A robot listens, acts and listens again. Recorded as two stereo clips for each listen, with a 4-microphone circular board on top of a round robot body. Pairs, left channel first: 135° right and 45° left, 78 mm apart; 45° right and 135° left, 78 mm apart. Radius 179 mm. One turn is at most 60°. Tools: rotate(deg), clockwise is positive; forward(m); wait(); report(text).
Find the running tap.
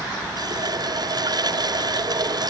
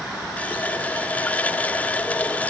rotate(-25)
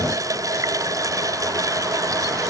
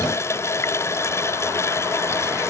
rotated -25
report("Found it: a running tap, straight ahead.")